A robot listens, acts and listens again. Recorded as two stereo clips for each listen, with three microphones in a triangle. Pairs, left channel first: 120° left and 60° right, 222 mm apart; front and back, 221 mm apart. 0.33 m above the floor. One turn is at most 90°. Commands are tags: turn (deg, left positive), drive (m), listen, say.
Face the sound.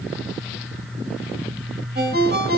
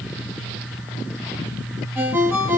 <turn deg="-90"/>
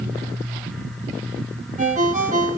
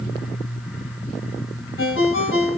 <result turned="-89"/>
<turn deg="-10"/>
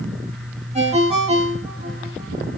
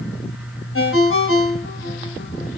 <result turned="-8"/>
<say>Facing the ringtone.</say>